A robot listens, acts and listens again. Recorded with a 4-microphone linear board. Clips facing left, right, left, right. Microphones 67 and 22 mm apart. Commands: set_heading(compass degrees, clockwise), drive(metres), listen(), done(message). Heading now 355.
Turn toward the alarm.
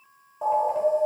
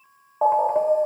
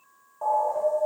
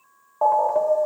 set_heading(40)
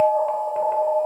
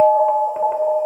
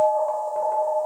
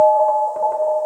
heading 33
done("Facing the alarm, under 1 m away.")